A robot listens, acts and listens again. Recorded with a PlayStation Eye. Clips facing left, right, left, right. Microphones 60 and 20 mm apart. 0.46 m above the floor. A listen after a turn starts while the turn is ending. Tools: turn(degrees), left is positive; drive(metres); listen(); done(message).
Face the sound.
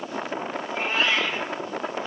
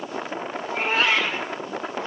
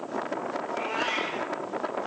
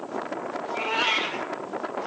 turn(degrees=-65)
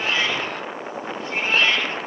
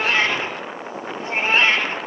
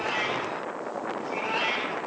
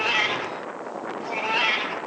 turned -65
turn(degrees=-30)
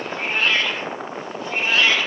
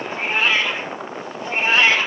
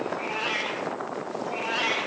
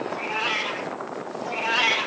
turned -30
turn(degrees=-30)
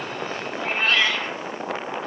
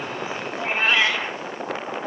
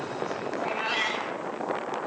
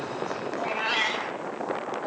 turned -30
turn(degrees=-15)
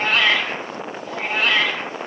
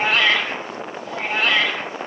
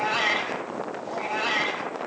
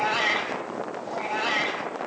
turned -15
done("Facing the cat meowing.")